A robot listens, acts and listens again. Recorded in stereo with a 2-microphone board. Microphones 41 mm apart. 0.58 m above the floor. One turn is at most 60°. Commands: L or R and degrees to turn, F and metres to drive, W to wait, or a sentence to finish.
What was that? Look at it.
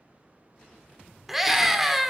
R30
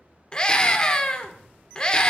L25
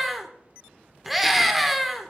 Found it: a scream, straight ahead.